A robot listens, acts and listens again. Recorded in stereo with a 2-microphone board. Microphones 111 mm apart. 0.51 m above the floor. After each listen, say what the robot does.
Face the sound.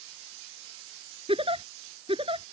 Turn 55° right.
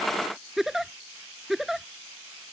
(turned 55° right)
Found it: a giggle, straight ahead.